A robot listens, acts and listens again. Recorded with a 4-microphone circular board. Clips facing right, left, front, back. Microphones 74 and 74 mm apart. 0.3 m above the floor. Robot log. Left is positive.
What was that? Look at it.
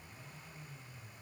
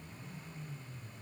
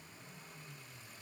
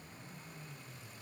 cmd idle
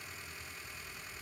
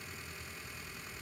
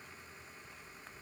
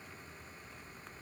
cmd idle
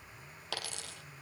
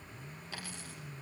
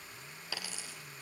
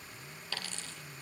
note: The dropped coin: 80° right.
cmd yaw -80
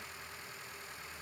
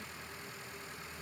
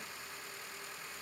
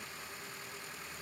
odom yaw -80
end: Facing where the dropped coin came from. I can't hear it now.